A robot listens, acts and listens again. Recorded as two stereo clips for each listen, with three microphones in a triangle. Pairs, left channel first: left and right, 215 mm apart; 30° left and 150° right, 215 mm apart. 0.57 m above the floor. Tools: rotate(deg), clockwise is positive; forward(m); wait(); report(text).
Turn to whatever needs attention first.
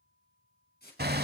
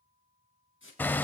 wait()
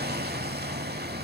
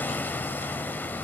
wait()
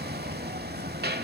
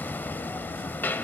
report("I can't make out anything urgent to turn to.")